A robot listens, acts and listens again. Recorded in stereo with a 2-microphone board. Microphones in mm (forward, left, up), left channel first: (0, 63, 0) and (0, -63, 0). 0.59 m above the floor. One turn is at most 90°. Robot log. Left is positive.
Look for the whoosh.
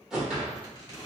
cmd yaw -30
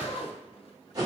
note: So it is at 145° right.
cmd yaw -90
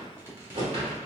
note: The whoosh is now 55° right.
cmd yaw -55
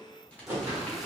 note: The whoosh is now 20° right.
cmd yaw -20
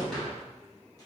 end: Found it: a whoosh, straight ahead.